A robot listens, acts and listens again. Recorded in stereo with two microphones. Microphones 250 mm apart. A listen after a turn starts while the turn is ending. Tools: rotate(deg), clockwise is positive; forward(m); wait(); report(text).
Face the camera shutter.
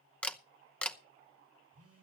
rotate(-30)
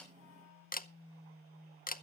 rotate(-145)
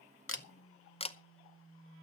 rotate(-25)
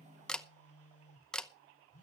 report("Found it: a camera shutter, straight ahead, under 1 m away.")